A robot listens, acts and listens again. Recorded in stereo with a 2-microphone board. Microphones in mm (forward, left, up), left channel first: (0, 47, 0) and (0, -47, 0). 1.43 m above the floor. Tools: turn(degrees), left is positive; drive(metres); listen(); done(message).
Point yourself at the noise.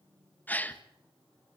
turn(degrees=15)
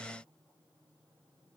listen()
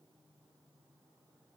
done("I heard a gasp, but can't make it out now. It was about straight ahead or 150° left.")